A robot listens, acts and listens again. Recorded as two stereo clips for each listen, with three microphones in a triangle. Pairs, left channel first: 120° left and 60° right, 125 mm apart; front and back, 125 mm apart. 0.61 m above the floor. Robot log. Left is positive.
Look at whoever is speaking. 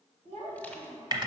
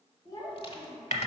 note: The child speaking: 55° right.
cmd yaw -55
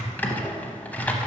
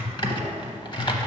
cmd idle
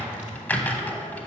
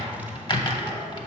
cmd idle
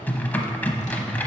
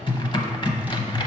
end: Facing where the child speaking came from. I can't hear it now.